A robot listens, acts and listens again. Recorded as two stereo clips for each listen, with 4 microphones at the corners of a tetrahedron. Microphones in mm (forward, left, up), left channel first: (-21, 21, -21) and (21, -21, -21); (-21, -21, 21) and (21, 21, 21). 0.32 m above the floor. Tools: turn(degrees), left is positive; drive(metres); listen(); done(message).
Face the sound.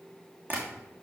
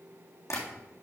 turn(degrees=-100)
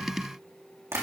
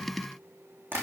done("Found it: tapping, straight ahead, 2 to 4 m away.")